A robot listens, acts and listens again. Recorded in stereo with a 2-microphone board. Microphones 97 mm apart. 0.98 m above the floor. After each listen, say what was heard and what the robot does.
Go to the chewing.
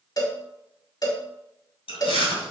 The chewing: about 65° left or 115° left. Turn 65° left.
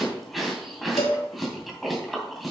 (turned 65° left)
Drive 1.0 m forward.
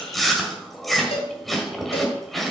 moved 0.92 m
Drive 1.0 m forward.
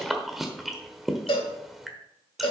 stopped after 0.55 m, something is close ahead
Arrived at the chewing, straight ahead.